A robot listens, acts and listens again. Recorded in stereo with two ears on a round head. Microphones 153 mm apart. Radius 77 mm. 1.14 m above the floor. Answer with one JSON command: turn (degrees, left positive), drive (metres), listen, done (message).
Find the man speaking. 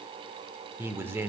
{"turn": -30}
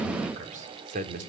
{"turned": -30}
{"turn": -135}
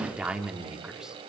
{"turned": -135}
{"done": "Facing the man speaking, 2 to 4 m away."}